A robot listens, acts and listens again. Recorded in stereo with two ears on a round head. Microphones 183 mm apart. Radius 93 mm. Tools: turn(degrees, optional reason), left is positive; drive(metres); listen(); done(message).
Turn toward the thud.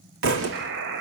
turn(degrees=-60, reason="The thud: about 60° right or 120° right.")
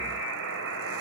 listen()
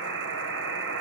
done("I heard a thud, but can't make it out now. It was about straight ahead or 60° right.")